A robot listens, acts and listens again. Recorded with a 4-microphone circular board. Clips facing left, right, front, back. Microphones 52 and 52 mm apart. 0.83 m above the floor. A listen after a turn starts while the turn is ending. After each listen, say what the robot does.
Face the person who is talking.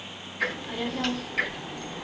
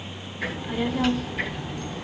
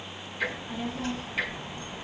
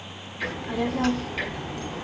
Turn 180° left.
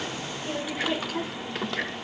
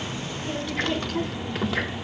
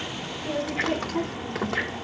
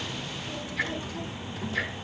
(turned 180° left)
Facing the child speaking, 1 to 2 m away.